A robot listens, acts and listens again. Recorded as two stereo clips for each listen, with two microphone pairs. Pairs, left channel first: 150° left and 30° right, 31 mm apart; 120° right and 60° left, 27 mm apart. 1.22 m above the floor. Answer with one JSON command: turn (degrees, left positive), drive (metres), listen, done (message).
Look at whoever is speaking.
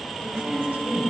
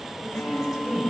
{"turn": -25}
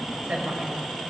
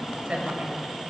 {"done": "Facing the woman speaking."}